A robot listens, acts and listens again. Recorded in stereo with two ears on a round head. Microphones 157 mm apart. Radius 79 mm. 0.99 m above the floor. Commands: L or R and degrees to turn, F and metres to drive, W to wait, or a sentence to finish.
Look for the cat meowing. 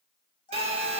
L25
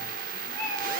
Facing the cat meowing, over 4 m away.